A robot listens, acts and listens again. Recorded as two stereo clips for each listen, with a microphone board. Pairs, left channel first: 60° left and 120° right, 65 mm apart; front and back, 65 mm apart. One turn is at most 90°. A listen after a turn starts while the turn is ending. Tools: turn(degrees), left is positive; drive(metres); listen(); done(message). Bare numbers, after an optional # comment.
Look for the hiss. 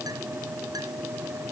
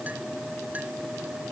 listen()
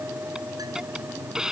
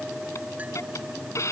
# The hiss: 40° right.
turn(-40)
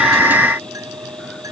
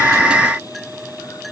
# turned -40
listen()
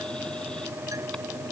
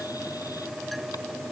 listen()
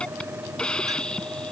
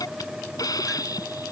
# The hiss is now 15° right.
turn(-15)
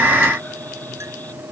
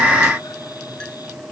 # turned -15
listen()
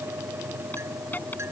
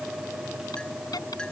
listen()
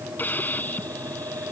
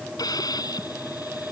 done("Found it: a hiss, straight ahead.")